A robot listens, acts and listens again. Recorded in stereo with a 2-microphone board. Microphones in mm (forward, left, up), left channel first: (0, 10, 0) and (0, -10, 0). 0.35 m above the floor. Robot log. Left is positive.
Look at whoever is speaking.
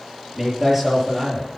cmd yaw -30
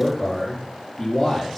note: So it is at 20° left.
cmd yaw +20
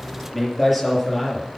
end: Facing the man speaking, over 4 m away.